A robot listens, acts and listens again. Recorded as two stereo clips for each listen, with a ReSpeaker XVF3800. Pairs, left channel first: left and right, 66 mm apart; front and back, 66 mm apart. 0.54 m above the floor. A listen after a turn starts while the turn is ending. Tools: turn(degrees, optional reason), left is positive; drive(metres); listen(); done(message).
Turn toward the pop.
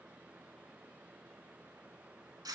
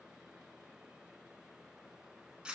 listen()
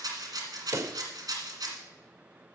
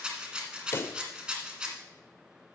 turn(degrees=-50, reason="The pop: 50° right.")
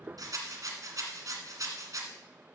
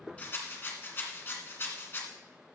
done("I heard a pop from this way, but can't make it out now.")